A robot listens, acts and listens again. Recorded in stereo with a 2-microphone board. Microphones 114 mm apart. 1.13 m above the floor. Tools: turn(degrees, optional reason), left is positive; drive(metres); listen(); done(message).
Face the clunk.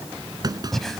turn(degrees=-35, reason="The clunk: about 35° right or 145° right.")
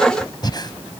listen()
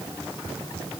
done("I heard a clunk, but can't make it out now. It was about straight ahead or 110° right.")